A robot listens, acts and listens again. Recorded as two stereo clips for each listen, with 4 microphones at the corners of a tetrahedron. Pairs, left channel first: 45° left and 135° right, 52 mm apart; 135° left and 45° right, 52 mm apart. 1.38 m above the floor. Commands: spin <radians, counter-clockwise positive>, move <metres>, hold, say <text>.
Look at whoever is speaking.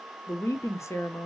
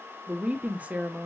spin 0.26
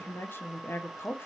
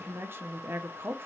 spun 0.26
say Facing the woman speaking.